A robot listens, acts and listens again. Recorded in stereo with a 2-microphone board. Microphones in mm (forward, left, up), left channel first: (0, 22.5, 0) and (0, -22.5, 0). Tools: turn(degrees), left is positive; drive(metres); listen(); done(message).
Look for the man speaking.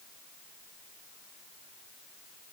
listen()
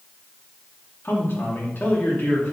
turn(degrees=45)
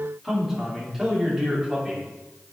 turn(degrees=-10)
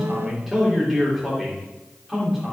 done("Facing the man speaking, 2 to 4 m away.")